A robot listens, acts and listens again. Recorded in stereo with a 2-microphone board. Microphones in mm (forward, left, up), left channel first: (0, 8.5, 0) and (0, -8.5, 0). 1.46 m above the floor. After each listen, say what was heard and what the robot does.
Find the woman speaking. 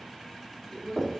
Turn 30° left.
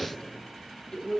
So it is at 145° left. Turn 145° left.
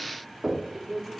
Facing the woman speaking, 2 to 4 m away.